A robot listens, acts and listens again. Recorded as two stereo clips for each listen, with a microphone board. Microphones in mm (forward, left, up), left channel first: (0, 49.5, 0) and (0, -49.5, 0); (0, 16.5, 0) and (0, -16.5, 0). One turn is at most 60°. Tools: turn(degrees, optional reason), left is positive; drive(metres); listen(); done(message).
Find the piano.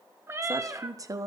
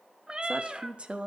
listen()
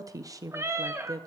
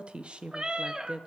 listen()
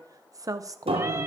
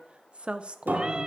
turn(degrees=-60, reason="The piano: about 70° right or 110° right.")
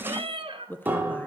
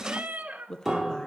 turn(degrees=-20, reason="So it is at 20° right.")
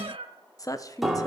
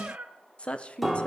done("Facing the piano.")